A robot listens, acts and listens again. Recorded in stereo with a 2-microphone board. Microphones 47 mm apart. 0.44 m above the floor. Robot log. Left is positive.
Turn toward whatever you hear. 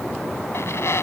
note: The squeak: about 70° left or 110° left.
cmd yaw +70
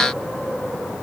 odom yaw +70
cmd idle
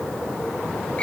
note: So it is at 30° left.
cmd yaw +30
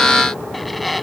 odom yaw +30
end: Facing the squeak.